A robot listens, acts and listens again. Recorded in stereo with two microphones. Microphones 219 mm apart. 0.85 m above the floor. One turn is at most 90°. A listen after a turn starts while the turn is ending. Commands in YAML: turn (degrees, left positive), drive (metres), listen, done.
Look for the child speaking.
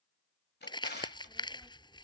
turn: 30
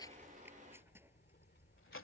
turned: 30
turn: 90
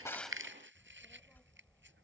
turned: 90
done: "Facing the child speaking."